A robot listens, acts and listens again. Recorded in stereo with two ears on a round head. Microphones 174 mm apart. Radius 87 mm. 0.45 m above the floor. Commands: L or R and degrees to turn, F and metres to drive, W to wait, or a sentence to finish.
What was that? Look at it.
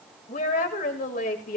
L50
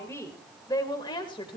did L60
L30
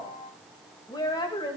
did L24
L30
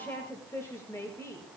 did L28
L15
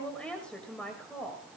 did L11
Found it: a woman speaking, straight ahead, 2 to 4 m away.